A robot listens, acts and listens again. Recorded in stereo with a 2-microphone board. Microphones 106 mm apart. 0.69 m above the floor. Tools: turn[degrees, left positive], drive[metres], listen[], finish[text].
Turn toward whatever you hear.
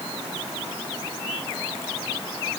Action: listen[]
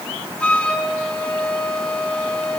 Action: turn[30]
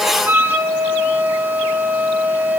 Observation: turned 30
Thought: So it is at 20° right.
Action: turn[-20]
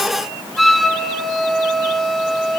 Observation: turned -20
Action: finish[Facing the flute.]